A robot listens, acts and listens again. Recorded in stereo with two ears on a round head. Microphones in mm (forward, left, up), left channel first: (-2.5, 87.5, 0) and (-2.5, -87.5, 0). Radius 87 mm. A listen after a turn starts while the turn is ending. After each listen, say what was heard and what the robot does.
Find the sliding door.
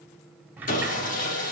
Turn 30° right.
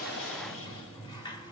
So it is at 20° left. Turn 20° left.
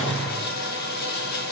Keep listening.
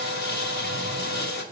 Keep listening.
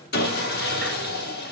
Facing where the sliding door came from. I can't hear it now.